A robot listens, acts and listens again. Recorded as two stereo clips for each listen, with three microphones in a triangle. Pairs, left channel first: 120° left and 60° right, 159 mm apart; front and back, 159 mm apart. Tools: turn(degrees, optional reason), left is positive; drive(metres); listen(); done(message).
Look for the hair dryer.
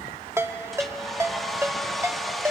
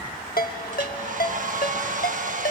turn(degrees=-150, reason="The hair dryer: 150° right.")
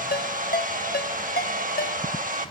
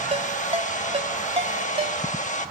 turn(degrees=-35, reason="The hair dryer is now 35° right.")
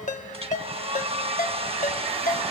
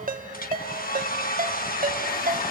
turn(degrees=-10, reason="The hair dryer is now 10° right.")
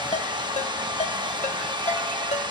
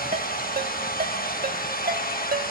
done("Facing the hair dryer, 1 to 2 m away.")